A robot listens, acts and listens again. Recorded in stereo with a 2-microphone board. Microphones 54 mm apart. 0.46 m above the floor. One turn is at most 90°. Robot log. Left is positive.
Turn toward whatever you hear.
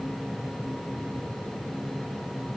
cmd idle
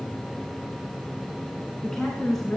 cmd yaw +30
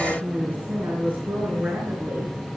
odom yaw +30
note: So it is at 35° right.
cmd yaw -35
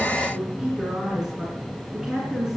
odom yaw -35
note: The woman speaking is now 10° right.
cmd yaw -10
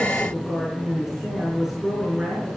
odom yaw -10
end: Facing the woman speaking.